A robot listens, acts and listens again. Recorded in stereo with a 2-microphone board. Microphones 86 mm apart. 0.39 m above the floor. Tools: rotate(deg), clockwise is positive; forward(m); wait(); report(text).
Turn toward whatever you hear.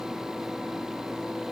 wait()
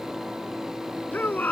rotate(-20)
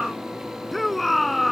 report("Found it: a shout, straight ahead.")